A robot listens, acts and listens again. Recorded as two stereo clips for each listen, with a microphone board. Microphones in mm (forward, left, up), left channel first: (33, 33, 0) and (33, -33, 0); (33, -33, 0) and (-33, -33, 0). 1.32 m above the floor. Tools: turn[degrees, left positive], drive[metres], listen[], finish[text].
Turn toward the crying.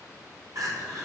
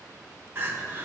Thought: The crying: 125° right.
Action: turn[-125]
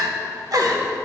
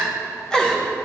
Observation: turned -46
Thought: The crying is now 75° right.
Action: turn[-75]
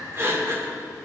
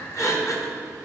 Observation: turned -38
Thought: The crying is now 40° right.
Action: turn[-40]
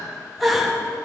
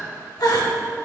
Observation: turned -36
Action: finish[Found it: crying, straight ahead.]